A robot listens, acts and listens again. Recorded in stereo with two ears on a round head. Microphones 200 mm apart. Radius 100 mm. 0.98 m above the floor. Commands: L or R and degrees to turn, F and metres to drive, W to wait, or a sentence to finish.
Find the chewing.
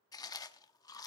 L15
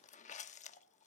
L145
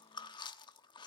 L20
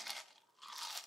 Facing the chewing.